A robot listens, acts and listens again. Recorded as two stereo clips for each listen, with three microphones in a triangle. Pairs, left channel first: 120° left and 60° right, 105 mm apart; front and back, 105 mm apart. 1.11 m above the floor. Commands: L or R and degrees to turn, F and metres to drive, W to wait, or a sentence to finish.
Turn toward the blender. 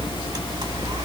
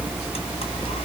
W
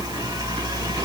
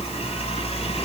W
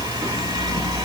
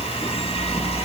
I can't make out a blender to turn to.